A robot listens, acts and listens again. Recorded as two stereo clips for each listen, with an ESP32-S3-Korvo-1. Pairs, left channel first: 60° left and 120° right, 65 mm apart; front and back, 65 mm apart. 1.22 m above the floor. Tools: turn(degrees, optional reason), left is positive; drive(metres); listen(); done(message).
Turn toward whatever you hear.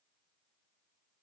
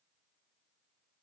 listen()
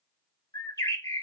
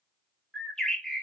turn(degrees=85, reason="The bird: 85° left.")
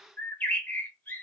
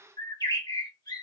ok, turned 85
done("Found it: a bird, straight ahead, 1 to 2 m away.")